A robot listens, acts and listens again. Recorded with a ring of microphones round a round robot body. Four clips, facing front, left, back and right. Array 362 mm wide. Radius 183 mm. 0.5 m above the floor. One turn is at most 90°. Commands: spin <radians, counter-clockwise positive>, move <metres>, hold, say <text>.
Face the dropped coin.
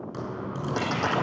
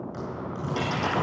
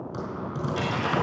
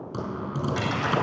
spin 0.26
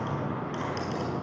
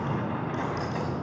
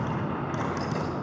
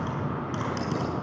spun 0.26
say Facing where the dropped coin came from. I can't hear it now.